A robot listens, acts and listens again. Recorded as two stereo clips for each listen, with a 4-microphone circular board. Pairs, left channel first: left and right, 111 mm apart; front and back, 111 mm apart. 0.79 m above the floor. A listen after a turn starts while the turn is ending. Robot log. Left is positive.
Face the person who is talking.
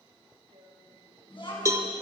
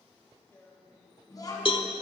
note: The child speaking: 55° left.
cmd yaw +55
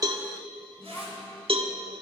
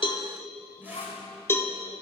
note: The child speaking is now 20° left.
cmd yaw +20
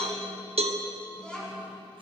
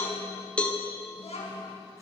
note: The child speaking is now 10° left.
cmd yaw +10
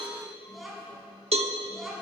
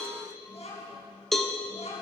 end: Found it: a child speaking, straight ahead, over 4 m away.